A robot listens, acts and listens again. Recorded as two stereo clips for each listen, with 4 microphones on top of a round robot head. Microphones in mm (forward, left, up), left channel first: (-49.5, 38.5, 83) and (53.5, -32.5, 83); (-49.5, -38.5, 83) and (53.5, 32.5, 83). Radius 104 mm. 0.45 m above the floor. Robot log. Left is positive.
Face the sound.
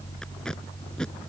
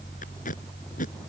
note: The tape being pulled: 130° right.
cmd yaw -130
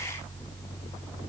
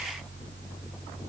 cmd idle
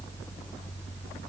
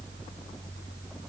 cmd idle
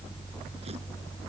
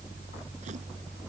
end: Facing where the tape being pulled came from. I can't hear it now.